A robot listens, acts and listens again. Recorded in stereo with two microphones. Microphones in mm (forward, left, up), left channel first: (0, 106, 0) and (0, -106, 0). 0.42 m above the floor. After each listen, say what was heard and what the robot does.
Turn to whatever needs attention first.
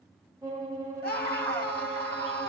The scream: about 45° left or 135° left. Turn 45° left.
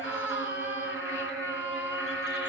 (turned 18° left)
So it is at 115° left. Turn 115° left.
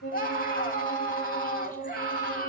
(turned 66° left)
The scream is now 45° left. Turn 45° left.
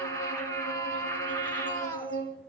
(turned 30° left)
The scream is now 15° left. Turn 15° left.
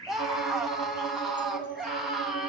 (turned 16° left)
Facing the scream.